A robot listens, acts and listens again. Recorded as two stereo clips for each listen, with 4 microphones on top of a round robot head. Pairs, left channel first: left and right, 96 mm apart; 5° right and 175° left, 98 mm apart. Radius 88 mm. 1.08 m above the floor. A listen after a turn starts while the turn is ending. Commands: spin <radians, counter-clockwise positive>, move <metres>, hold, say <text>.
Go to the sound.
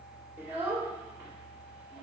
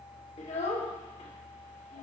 spin -0.26
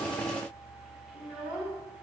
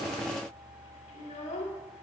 move 1.0
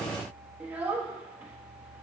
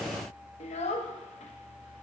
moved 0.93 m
spin -0.26
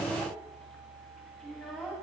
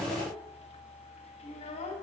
move 1.0
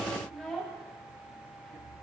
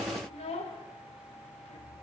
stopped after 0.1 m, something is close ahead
say Arrived at the child speaking, straight ahead.